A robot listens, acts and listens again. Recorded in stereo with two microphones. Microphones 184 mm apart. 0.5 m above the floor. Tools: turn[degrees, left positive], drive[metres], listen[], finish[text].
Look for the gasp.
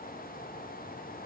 Action: listen[]
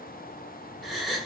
Action: turn[30]
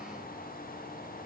Action: listen[]
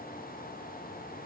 Action: finish[I heard a gasp, but can't make it out now. It was about 30° right or 150° left.]